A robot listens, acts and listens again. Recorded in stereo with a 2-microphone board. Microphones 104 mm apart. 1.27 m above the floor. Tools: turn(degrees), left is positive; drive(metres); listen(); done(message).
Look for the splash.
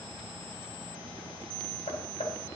listen()
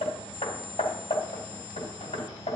listen()
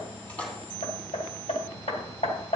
turn(degrees=30)
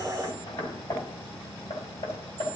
listen()
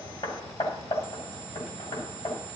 done("I heard a splash, but can't make it out now. It was about 15° right or 135° left.")